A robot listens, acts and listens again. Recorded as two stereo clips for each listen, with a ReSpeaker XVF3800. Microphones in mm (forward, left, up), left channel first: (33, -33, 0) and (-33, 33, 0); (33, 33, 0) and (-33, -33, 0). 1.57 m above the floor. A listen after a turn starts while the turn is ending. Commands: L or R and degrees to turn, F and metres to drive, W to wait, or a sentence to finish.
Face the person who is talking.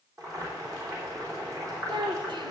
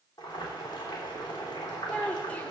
L115
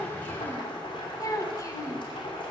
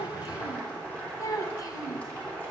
Found it: a child speaking, straight ahead, 1 to 2 m away.